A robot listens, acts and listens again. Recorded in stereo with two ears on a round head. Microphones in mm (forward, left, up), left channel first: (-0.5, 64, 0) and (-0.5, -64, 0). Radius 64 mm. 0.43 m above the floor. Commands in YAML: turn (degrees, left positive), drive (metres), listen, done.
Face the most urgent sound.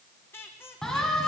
turn: 30
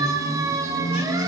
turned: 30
turn: -25
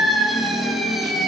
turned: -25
done: "Found it: a siren, straight ahead."